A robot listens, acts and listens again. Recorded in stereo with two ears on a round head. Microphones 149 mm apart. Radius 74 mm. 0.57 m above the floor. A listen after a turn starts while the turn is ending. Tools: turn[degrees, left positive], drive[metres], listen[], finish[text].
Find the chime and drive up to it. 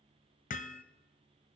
Action: listen[]
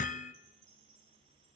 Action: turn[-90]
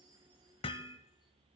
Action: listen[]
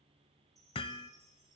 Action: drive[1.0]
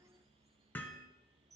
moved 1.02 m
Action: drive[1.0]
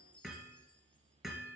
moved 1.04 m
Thought: The chime is now 10° left.
Action: turn[10]
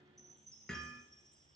Action: drive[1.0]
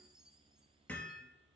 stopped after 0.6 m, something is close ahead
Action: finish[I am next to the chime.]